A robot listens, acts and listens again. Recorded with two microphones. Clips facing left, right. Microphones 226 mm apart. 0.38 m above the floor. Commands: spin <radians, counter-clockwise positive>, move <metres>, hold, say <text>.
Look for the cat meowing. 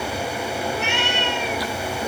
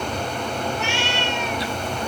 spin 0.96
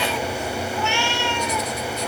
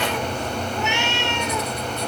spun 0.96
spin -0.44
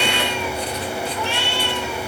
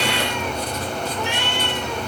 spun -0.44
spin -0.35
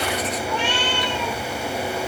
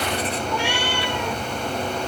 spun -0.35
spin -0.17
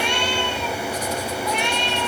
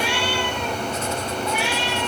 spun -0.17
say Facing the cat meowing, 2 to 4 m away.